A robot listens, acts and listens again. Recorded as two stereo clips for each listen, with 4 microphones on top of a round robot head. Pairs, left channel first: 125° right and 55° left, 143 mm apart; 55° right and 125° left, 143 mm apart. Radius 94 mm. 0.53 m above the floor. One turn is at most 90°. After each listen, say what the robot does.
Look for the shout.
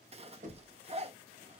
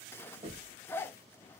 Keep listening.
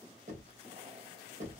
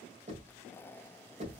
Keep listening.
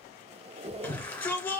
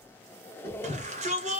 Turn 90° left.
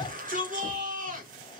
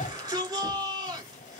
Turn 65° left.
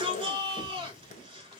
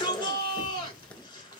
Found it: a shout, straight ahead, 2 to 4 m away.